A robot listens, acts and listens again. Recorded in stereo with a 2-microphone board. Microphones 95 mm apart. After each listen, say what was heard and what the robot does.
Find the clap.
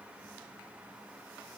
Keep listening.
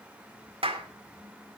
Turn 90° right.
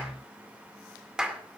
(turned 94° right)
So it is at 10° right. Turn 10° right.
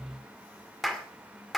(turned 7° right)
Found it: a clap, straight ahead, 2 to 4 m away.